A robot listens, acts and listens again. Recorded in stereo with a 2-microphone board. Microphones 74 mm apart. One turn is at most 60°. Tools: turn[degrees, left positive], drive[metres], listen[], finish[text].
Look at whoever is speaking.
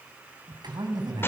Thought: The man speaking: about 70° right or 110° right.
Action: turn[-60]
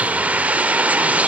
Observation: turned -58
Action: listen[]
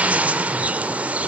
Action: listen[]
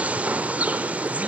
Action: finish[I heard a man speaking, but can't make it out now. It was about 10° right or 55° right.]